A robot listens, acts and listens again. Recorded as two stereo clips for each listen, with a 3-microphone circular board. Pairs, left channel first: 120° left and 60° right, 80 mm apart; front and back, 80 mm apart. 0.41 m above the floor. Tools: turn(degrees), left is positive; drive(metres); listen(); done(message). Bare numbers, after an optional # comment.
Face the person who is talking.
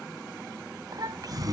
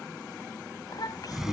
# The child speaking: 30° right.
turn(-30)
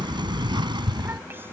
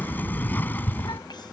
listen()
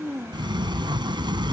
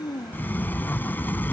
done("Found it: a child speaking, straight ahead.")